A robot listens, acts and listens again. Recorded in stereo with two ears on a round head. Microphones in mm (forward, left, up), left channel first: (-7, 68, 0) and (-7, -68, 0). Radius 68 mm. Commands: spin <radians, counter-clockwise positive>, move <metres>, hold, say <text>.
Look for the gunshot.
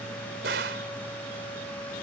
spin -1.22
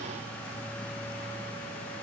hold
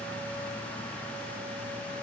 say I heard a gunshot, but can't make it out now. It was about straight ahead or 40° right.